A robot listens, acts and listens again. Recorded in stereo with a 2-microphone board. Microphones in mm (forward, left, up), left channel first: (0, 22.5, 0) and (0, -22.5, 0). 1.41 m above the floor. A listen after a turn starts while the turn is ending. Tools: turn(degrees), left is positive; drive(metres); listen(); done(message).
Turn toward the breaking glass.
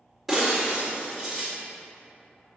turn(degrees=30)
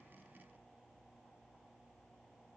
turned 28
listen()
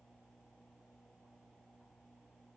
done("I heard breaking glass, but can't make it out now. It was about 30° right or 155° left.")